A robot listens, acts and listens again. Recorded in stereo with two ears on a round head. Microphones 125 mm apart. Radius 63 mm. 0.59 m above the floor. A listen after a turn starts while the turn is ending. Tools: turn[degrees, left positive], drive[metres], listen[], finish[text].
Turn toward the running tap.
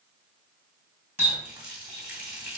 Action: turn[-30]
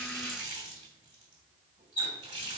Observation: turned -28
Thought: So it is at 140° right.
Action: turn[-140]
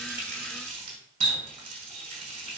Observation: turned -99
Thought: The running tap is now 40° right.
Action: turn[-40]
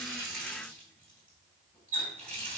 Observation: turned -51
Thought: The running tap is now 10° left.
Action: turn[10]
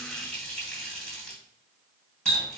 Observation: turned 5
Action: finish[Found it: a running tap, straight ahead, 2 to 4 m away.]